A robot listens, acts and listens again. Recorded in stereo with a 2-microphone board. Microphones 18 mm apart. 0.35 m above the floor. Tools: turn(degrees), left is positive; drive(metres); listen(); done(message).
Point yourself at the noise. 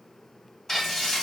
turn(degrees=20)
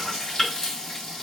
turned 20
turn(degrees=135)
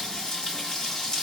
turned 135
turn(degrees=45)
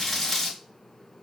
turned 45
turn(degrees=15)
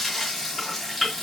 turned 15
done("Found it: frying, straight ahead, 2 to 4 m away.")